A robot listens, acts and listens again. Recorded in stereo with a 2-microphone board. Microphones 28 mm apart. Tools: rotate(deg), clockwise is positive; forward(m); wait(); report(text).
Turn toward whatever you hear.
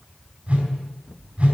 rotate(40)
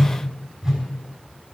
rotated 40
report("Found it: a whoosh, straight ahead, over 4 m away.")